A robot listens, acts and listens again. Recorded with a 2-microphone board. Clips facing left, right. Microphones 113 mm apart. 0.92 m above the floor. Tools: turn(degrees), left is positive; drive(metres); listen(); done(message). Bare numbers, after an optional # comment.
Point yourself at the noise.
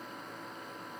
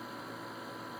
listen()
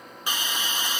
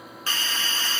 # The hiss: about 15° left or 165° left.
turn(15)
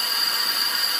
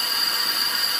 done("Facing the hiss.")